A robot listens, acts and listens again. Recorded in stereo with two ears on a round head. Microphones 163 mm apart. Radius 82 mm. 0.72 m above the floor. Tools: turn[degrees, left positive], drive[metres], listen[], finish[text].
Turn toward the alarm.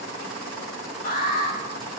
Thought: The alarm: about 50° left or 130° left.
Action: turn[50]
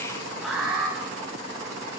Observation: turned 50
Action: finish[Found it: an alarm, straight ahead, over 4 m away.]